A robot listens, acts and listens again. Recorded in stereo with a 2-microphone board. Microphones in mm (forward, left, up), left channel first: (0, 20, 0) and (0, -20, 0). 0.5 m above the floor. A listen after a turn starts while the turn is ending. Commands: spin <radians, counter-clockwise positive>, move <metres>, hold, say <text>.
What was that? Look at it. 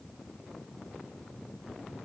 hold
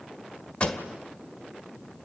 spin 0.44
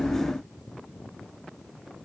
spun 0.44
hold
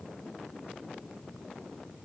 say I heard a pop, but can't make it out now. It was about straight ahead or 130° left.